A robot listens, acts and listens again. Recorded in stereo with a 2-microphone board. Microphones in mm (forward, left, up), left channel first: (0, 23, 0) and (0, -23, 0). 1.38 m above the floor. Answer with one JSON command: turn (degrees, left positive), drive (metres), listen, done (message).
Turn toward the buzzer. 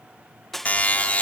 {"turn": 35}
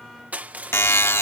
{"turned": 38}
{"turn": 105}
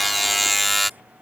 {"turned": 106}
{"done": "Found it: a buzzer, straight ahead."}